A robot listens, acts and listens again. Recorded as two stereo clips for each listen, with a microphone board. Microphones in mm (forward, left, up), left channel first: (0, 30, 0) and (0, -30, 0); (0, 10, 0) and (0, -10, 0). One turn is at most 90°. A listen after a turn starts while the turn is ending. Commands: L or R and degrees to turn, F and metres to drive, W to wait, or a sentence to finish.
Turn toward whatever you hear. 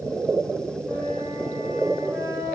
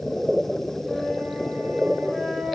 R55
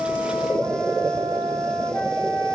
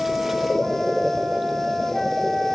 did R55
R70
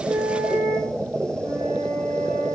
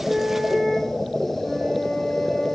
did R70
L15
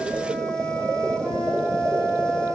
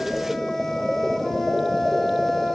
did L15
Found it: a flute, straight ahead, over 4 m away.